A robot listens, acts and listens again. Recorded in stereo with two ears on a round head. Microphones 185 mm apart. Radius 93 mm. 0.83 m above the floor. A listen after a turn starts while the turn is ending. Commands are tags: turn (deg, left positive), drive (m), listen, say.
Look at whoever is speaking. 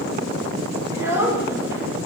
<turn deg="-30"/>
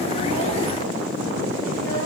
<listen/>
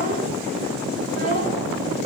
<listen/>
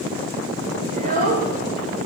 <turn deg="-140"/>
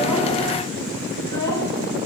<listen/>
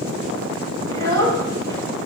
<turn deg="15"/>
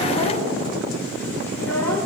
<listen/>
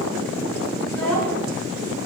<turn deg="10"/>
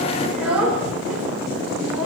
<say>Facing the child speaking.</say>